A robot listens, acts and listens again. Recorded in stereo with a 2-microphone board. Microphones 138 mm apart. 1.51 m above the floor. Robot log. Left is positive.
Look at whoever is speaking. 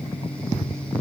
cmd idle
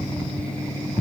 cmd idle
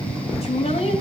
note: The woman speaking: about 50° left or 130° left.
cmd yaw +50
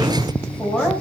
end: Facing the woman speaking, over 4 m away.